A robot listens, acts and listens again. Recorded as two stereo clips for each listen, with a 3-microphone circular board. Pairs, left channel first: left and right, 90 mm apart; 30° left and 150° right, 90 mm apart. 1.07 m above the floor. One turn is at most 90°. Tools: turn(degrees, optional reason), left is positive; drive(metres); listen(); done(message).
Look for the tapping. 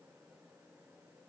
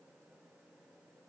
listen()
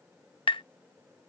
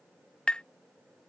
turn(degrees=90, reason="The tapping: 110° left.")
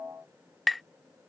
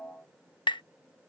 done("Facing the tapping.")